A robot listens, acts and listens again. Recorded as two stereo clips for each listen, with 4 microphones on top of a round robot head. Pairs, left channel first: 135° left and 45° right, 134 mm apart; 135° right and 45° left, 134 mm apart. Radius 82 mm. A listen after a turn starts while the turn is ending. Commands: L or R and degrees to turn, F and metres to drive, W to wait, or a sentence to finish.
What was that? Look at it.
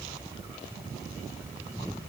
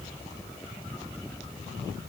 W
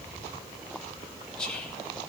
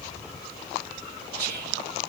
L50
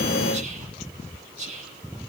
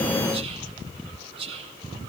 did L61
R10
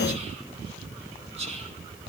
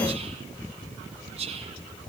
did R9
Found it: whispering, straight ahead, 2 to 4 m away.